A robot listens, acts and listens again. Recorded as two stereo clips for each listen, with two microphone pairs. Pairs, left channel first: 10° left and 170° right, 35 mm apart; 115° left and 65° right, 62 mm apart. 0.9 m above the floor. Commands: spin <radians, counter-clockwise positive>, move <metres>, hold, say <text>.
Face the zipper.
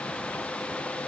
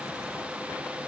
hold
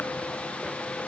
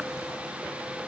hold
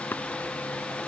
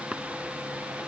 say I can't make out a zipper to turn to.